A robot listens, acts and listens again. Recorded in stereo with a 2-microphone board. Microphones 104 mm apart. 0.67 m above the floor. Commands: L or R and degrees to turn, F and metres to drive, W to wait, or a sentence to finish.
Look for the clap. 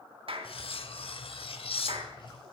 R60
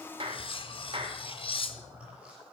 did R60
R60
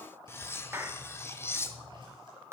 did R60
R25
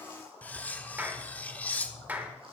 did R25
R15
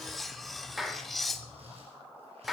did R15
Facing the clap.